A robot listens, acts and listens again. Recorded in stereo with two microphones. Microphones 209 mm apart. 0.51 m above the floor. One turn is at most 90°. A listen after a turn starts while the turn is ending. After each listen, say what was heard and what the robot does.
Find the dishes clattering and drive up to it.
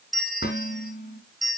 The dishes clattering: about 50° left or 130° left. Turn 50° left.
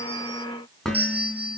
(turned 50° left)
Drive 1.0 m forward.
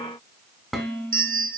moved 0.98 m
Drive 1.0 m forward.
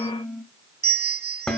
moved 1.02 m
Drive 1.0 m forward.
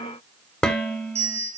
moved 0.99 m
Drive 1.0 m forward.
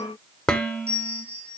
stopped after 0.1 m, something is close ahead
Arrived at the dishes clattering, straight ahead.